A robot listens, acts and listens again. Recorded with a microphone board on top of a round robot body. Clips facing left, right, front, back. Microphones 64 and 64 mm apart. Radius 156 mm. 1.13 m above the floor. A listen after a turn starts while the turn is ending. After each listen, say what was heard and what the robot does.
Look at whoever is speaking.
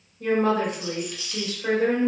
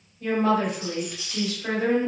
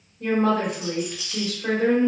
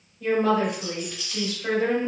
The woman speaking: 50° left. Turn 50° left.
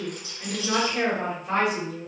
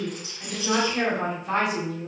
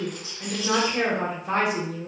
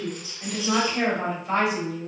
The woman speaking is now 10° right. Turn 10° right.
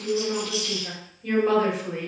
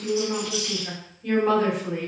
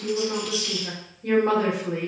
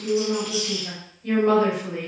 Facing the woman speaking, 1 to 2 m away.